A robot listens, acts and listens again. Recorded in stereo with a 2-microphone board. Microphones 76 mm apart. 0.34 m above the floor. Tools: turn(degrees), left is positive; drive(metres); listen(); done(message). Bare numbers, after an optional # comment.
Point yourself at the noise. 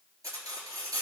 # The cutlery clinking: about 50° right or 130° right.
turn(-50)
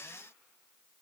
listen()
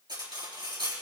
# So it is at 75° right.
turn(-75)
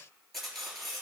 done("Facing the cutlery clinking, 2 to 4 m away.")